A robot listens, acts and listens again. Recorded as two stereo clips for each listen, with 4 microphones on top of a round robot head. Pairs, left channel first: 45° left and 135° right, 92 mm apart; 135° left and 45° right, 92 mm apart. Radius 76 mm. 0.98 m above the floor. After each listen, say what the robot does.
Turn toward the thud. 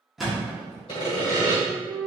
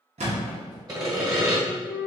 Turn 45° right.
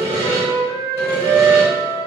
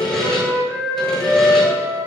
I heard a thud from this way, but can't make it out now.